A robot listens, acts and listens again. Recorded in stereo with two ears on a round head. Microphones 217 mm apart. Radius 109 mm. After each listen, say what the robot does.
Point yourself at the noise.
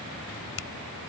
Turn 55° left.
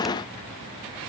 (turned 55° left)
Keep listening.
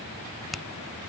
Found it: a finger snap, straight ahead.